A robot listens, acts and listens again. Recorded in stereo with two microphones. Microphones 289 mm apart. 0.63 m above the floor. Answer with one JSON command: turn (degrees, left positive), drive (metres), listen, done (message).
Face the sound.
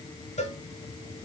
{"turn": 25}
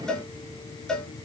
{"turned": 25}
{"done": "Found it: a cowbell, straight ahead."}